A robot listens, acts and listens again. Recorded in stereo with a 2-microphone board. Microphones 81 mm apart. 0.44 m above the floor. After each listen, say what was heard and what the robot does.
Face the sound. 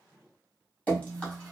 Turn 30° left.
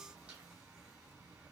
Keep listening.
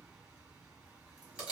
So it is at 15° right. Turn 15° right.
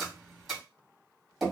Facing the dripping.